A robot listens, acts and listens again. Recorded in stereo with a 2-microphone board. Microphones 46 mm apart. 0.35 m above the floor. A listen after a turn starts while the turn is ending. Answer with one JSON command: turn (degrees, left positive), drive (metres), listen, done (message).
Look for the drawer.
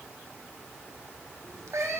{"listen": true}
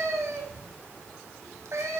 {"listen": true}
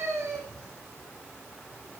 {"done": "I can't make out a drawer to turn to."}